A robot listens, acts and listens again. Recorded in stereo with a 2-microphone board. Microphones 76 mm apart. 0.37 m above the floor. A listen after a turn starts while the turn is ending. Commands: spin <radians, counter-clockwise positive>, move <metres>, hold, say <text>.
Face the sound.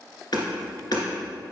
spin 1.22
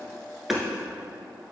say Found it: hammering, straight ahead, 1 to 2 m away.